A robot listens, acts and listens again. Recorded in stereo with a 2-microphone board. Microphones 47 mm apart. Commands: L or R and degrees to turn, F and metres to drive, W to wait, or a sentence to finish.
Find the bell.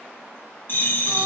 L45
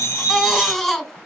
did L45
L90
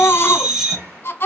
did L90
R10
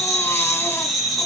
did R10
Found it: a bell, straight ahead.